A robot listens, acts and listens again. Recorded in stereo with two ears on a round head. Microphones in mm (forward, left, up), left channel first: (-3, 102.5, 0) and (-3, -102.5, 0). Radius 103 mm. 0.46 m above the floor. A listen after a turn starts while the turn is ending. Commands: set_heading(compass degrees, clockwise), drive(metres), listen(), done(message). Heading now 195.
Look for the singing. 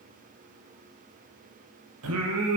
set_heading(270)
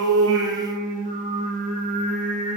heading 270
set_heading(305)
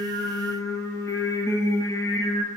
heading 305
set_heading(290)
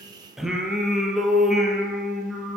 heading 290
done("Facing the singing, over 4 m away.")